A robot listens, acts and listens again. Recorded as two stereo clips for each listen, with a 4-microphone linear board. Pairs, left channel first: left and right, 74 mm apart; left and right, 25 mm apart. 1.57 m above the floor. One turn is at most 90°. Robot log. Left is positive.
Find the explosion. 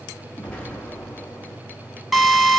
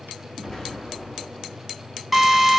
cmd yaw +30
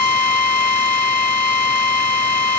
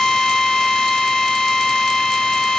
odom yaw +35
cmd idle
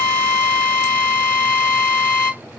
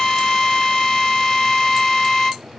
end: I heard an explosion, but can't make it out now. It was about 20° right or 130° left.